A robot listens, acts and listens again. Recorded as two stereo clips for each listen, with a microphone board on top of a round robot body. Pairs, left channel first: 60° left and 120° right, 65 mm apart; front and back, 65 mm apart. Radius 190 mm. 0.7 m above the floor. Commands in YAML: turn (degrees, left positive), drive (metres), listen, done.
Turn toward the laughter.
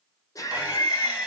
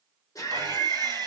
turn: 25
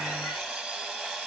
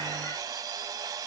listen: true
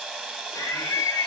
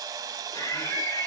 turn: 20
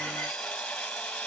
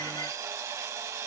listen: true
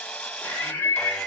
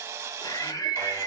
done: "Found it: laughter, straight ahead, 1 to 2 m away."